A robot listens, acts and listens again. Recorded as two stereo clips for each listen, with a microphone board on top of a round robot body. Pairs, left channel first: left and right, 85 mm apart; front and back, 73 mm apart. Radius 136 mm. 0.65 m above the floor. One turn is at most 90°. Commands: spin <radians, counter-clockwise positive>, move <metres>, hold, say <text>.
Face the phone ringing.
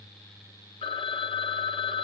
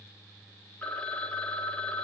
spin 1.40
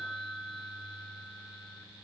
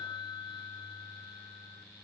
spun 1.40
say Found it: a phone ringing, straight ahead.